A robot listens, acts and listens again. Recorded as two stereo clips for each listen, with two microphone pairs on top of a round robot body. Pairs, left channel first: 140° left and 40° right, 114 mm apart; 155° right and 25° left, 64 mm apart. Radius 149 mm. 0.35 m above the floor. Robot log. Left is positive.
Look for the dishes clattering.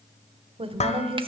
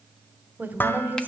note: The dishes clattering: 150° left.
cmd yaw +150
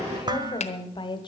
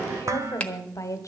end: Facing the dishes clattering, 1 to 2 m away.